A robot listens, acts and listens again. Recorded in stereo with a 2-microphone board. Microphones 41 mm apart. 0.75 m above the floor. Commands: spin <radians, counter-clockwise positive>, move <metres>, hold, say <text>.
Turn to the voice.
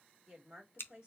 spin -0.35
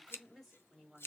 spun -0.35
say Found it: a woman speaking, straight ahead, 2 to 4 m away.